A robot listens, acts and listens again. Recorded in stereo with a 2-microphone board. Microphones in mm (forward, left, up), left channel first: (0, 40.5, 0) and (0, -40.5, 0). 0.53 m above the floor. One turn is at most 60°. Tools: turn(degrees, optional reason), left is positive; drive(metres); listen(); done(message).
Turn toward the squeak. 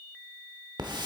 listen()
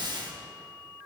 listen()
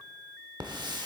done("I can't make out a squeak, only a hiss.")